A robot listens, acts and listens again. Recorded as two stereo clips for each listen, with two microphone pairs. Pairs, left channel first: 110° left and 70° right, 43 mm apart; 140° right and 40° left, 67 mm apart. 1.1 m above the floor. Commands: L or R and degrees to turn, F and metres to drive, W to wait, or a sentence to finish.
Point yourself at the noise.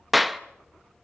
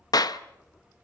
R160
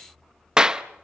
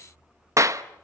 Found it: a clap, straight ahead.